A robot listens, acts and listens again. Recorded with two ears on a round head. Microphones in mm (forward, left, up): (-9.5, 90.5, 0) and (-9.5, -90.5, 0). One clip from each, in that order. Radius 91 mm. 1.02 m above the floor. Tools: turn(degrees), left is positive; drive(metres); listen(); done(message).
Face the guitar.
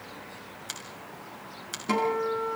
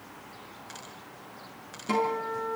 turn(degrees=30)
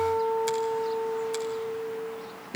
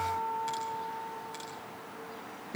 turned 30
turn(degrees=145)
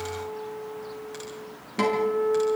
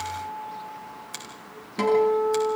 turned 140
done("Facing the guitar, over 4 m away.")